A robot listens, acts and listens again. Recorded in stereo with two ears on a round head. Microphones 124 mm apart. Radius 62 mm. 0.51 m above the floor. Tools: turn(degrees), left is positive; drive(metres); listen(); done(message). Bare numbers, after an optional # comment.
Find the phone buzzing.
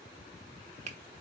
listen()
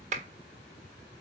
listen()
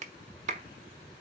done("I can't make out a phone buzzing to turn to.")